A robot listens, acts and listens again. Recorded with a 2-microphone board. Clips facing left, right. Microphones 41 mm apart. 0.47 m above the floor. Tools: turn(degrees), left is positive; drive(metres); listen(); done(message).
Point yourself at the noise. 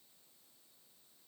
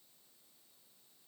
listen()
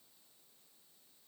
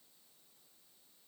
listen()
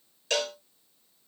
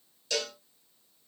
turn(degrees=55)
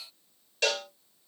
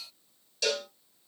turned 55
turn(degrees=45)
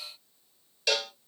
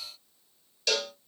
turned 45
turn(degrees=10)
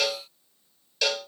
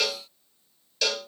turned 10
done("Facing the cowbell.")